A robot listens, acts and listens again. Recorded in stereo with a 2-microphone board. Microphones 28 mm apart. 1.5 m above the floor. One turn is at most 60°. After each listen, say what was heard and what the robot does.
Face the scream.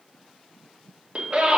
The scream: about 45° right or 135° right. Turn 45° right.
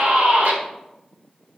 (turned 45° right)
So it is at 95° right. Turn 60° right.
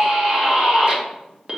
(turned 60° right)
The scream is now 35° right. Turn 35° right.
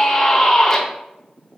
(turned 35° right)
The scream is now 10° left. Turn 10° left.
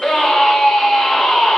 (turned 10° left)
Facing the scream, under 1 m away.